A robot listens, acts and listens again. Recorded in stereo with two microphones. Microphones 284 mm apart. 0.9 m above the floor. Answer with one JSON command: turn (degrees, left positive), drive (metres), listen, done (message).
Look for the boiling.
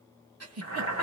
{"turn": 70}
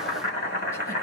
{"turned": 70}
{"turn": 35}
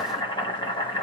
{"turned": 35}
{"turn": 15}
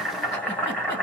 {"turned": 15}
{"done": "Found it: boiling, straight ahead."}